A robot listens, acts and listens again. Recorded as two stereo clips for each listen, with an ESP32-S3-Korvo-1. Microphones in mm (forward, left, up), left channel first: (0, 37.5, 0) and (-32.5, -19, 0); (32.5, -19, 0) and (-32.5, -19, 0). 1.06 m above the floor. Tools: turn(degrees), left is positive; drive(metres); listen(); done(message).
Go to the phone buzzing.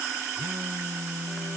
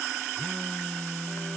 turn(degrees=-75)
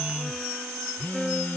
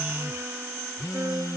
drive(metres=1.0)
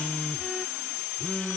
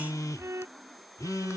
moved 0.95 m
drive(metres=1.0)
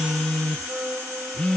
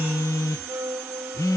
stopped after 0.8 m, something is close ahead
turn(degrees=-15)
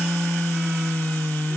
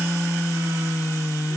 done("I am next to the phone buzzing.")